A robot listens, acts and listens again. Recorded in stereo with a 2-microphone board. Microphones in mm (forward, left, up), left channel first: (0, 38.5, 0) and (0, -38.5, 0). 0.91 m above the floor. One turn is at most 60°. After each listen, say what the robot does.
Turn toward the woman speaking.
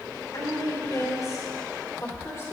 Turn 40° left.
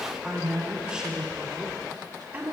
Turn 25° right.
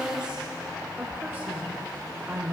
Turn 30° right.
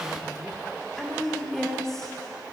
Found it: a woman speaking, straight ahead, 2 to 4 m away.